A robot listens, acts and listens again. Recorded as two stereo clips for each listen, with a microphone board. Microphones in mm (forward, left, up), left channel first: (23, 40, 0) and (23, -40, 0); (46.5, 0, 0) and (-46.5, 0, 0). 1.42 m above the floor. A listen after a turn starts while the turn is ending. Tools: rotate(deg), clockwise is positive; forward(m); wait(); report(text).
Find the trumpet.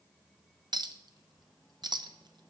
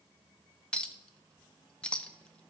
wait()
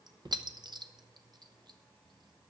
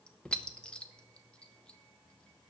wait()
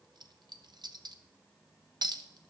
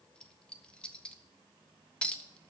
report("I can't make out a trumpet to turn to.")